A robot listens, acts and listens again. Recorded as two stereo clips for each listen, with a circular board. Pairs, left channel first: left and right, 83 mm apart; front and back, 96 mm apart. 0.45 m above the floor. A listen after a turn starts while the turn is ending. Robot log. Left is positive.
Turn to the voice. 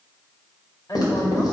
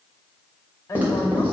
note: The woman speaking: 55° left.
cmd yaw +55
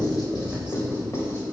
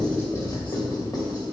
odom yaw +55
cmd idle
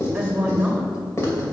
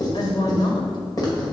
note: The woman speaking is now 15° right.
cmd yaw -15
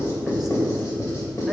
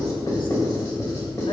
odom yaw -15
cmd idle
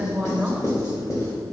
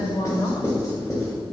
note: The woman speaking is now 10° right.
cmd yaw -10
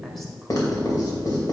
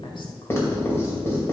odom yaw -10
end: Facing the woman speaking, 1 to 2 m away.